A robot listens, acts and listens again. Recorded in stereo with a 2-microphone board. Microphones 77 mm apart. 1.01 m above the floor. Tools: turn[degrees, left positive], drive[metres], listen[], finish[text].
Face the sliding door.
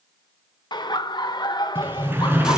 Thought: The sliding door: about 25° right or 155° right.
Action: turn[-25]
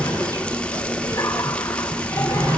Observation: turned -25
Thought: So it is at 125° right.
Action: turn[-125]
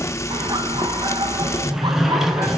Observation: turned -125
Action: finish[Facing the sliding door, 2 to 4 m away.]